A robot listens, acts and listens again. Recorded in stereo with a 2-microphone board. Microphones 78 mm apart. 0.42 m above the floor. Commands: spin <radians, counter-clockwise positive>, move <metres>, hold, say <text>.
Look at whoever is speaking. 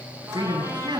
spin -1.22
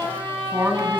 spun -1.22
spin -0.52
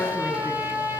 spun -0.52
hold
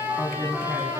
spin 0.26
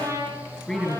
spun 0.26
say Found it: a man speaking, straight ahead.